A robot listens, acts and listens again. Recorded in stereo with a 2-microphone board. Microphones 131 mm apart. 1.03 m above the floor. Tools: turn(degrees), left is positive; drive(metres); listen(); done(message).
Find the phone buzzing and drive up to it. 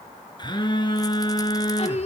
turn(degrees=35)
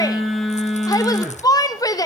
drive(metres=1.0)
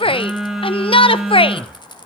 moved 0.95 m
drive(metres=1.0)
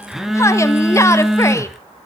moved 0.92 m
drive(metres=1.0)
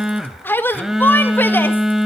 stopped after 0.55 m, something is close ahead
done("Arrived at the phone buzzing, straight ahead.")